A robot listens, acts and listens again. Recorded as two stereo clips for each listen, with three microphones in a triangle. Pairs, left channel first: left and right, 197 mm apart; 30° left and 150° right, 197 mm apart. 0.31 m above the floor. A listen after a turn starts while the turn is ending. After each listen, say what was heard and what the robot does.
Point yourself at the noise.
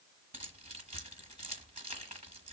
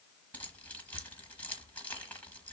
The keys jangling: 50° right. Turn 50° right.
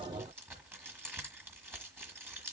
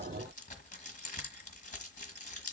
The keys jangling is now 15° right. Turn 15° right.
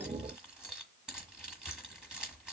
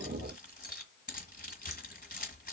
Found it: keys jangling, straight ahead, 1 to 2 m away.